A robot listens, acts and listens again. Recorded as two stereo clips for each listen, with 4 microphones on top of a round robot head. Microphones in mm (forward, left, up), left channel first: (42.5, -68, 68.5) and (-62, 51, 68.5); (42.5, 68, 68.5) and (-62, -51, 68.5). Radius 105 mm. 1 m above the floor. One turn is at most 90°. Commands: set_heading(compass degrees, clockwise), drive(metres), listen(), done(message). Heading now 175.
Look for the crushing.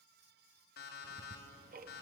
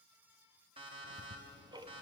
listen()
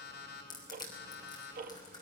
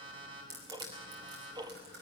set_heading(265)
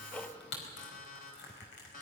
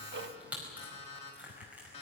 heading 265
set_heading(315)
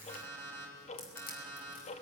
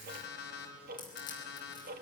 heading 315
listen()
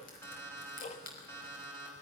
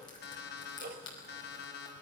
set_heading(330)
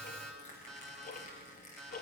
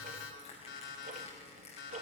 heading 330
listen()
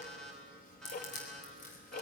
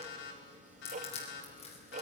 done("Facing the crushing, over 4 m away.")